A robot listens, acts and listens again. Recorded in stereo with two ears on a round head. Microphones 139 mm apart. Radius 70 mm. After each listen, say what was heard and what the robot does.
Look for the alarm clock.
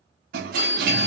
The alarm clock: about 25° left or 155° left. Turn 25° left.
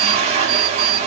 Keep listening.
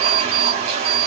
Facing the alarm clock, 2 to 4 m away.